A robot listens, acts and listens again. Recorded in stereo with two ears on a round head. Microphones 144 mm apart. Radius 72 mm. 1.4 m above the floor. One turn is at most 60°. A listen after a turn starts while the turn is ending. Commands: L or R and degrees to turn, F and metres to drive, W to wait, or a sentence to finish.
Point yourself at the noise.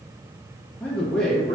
L30
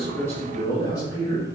L60
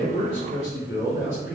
L60
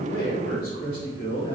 L30
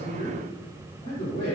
L20
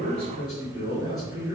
Facing the man speaking.